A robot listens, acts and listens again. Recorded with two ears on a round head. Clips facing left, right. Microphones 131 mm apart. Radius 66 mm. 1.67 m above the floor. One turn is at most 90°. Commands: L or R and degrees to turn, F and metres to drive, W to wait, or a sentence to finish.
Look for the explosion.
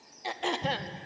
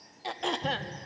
L30
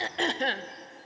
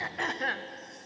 W
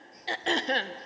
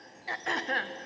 I heard an explosion, but can't make it out now. It was about straight ahead or 120° left.